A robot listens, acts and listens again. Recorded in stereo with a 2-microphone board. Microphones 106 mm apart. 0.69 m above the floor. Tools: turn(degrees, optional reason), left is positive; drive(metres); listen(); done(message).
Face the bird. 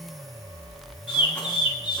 turn(degrees=50, reason="The bird: about 50° left or 130° left.")
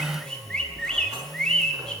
turn(degrees=10, reason="So it is at 10° left.")
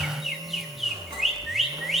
done("Facing the bird.")